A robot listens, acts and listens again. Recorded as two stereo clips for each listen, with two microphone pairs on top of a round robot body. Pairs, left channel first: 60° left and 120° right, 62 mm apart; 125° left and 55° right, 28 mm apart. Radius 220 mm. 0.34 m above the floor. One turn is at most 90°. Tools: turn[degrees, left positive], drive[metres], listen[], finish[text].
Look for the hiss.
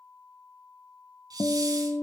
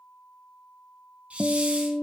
Thought: The hiss: 95° right.
Action: turn[-90]
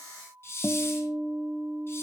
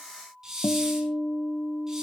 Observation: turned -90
Thought: The hiss is now 15° left.
Action: turn[15]
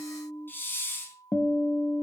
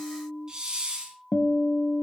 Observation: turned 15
Action: finish[Facing the hiss.]